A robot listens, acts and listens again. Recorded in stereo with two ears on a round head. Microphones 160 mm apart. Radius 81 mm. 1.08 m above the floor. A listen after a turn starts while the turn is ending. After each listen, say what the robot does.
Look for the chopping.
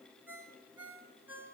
Keep listening.
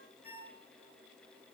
Keep listening.
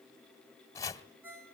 Turn 20° left.
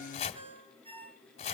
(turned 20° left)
Turn 140° left.
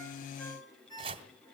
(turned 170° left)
Turn 30° right.
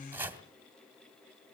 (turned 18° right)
Turn 10° right.
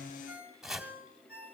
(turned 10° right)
Found it: chopping, straight ahead.